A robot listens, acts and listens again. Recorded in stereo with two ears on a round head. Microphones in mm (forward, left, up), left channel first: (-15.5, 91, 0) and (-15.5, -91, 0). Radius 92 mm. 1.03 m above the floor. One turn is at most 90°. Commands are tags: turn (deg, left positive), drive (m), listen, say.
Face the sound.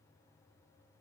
<listen/>
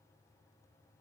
<listen/>
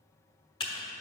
<turn deg="25"/>
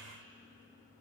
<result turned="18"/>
<turn deg="90"/>
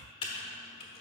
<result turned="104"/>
<turn deg="30"/>
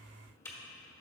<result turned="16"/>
<turn deg="15"/>
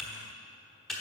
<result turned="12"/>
<say>Found it: typing on a keyboard, straight ahead, 1 to 2 m away.</say>